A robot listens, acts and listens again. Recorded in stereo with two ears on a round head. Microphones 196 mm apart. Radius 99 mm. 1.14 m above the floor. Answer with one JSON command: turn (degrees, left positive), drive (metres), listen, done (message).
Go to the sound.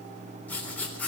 {"turn": 30}
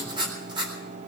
{"turn": -20}
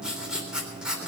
{"drive": 1.0}
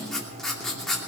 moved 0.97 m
{"drive": 1.0}
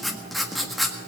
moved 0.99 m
{"drive": 1.0}
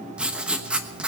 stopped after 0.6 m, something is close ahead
{"done": "Arrived at the writing, straight ahead."}